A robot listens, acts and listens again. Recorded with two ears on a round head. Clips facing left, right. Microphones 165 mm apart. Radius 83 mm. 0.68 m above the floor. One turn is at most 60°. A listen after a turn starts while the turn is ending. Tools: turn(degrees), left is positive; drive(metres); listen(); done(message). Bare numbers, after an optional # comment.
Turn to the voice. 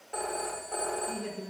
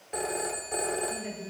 # The woman speaking: about 70° left or 110° left.
turn(60)
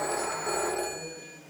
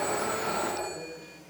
# So it is at 10° left.
turn(10)
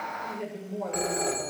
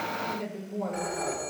done("Facing the woman speaking.")